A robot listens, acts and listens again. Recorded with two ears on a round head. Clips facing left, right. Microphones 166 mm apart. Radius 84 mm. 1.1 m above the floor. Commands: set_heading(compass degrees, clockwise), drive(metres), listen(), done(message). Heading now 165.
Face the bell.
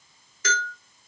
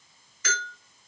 set_heading(130)
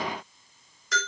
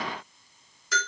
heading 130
done("Found it: a bell, straight ahead.")